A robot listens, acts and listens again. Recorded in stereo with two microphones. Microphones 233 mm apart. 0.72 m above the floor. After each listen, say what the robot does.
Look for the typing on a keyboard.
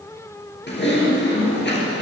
Turn 50° left.
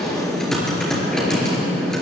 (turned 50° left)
Found it: typing on a keyboard, straight ahead.